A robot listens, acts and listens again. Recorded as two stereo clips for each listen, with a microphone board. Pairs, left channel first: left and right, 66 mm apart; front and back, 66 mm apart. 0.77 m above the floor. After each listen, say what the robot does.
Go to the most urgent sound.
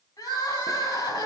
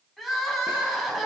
Turn 90° left.
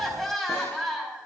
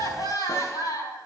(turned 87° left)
Drive 1.0 m forward.
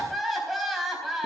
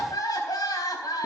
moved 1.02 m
Drive 1.0 m forward.
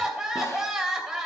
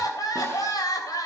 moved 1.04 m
Turn 10° right.
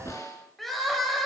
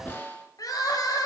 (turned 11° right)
Drive 1.0 m forward.
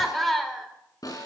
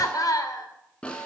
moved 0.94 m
Drive 1.0 m forward.
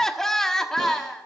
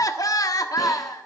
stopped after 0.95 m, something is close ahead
I am next to the crying.